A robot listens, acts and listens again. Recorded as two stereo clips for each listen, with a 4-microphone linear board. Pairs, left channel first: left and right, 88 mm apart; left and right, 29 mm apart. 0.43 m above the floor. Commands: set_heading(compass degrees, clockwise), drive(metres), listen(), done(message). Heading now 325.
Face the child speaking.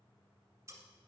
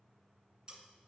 listen()
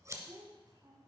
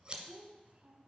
set_heading(5)
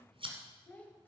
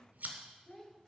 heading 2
set_heading(342)
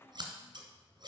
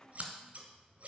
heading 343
listen()
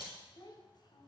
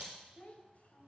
set_heading(283)
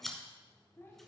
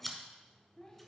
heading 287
set_heading(257)
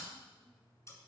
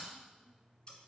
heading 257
listen()
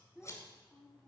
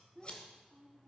done("Facing the child speaking, 1 to 2 m away.")